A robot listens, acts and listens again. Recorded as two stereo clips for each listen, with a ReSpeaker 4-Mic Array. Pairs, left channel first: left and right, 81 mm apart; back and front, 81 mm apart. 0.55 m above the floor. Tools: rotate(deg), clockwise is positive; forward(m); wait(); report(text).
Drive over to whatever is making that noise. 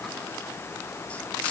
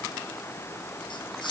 wait()
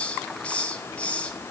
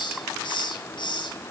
rotate(-165)
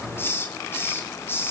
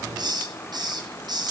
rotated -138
rotate(-30)
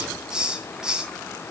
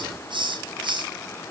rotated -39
rotate(10)
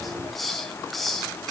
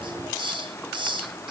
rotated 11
forward(1.0)
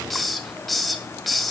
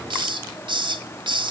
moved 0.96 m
forward(1.0)
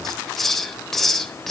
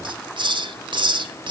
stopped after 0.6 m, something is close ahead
report("I am next to the hiss.")